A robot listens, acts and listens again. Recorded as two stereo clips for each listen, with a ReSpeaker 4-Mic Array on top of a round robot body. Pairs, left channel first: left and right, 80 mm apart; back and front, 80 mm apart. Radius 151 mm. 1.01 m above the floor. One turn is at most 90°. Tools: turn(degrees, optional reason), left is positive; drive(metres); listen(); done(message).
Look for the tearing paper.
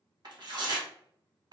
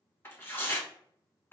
turn(degrees=-90, reason="The tearing paper: 120° right.")
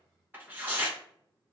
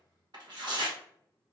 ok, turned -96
turn(degrees=-25, reason="The tearing paper is now 25° right.")
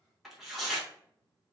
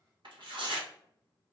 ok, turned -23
done("Found it: tearing paper, straight ahead, 1 to 2 m away.")